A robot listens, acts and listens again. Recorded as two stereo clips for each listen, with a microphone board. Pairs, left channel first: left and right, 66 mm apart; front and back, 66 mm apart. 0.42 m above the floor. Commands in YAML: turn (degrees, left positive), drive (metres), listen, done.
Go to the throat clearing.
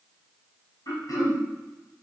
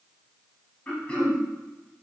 turn: 70
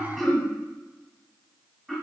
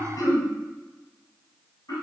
drive: 1.0
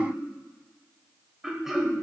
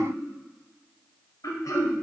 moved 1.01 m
turn: -10
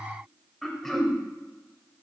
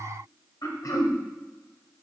drive: 1.0
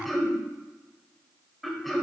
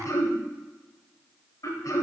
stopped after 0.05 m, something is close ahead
done: "Arrived at the throat clearing, straight ahead."